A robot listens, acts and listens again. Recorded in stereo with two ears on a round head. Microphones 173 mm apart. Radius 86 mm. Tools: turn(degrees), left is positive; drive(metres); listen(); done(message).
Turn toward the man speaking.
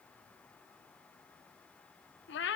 listen()
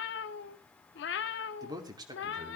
turn(degrees=-25)
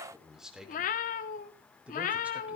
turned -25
turn(degrees=-30)
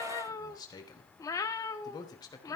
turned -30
turn(degrees=20)
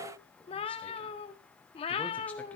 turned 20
listen()
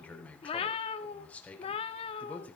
turn(degrees=10)
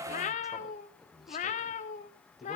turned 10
done("Found it: a man speaking, straight ahead, 2 to 4 m away.")